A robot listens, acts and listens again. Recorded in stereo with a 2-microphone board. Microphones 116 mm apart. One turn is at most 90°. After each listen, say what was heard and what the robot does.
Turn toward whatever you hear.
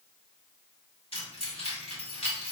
The keys jangling: about 55° left or 125° left. Turn 55° left.
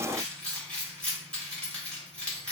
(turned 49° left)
So it is at 10° left. Turn 10° left.
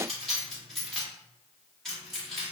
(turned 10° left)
Facing the keys jangling.